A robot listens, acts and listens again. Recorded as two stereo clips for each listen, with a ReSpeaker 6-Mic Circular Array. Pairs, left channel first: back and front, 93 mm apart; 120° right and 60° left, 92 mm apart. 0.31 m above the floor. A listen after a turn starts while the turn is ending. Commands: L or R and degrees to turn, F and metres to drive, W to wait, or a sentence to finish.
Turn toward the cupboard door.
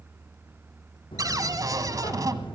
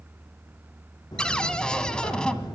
R40
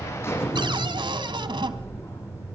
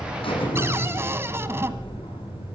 Facing the cupboard door, 1 to 2 m away.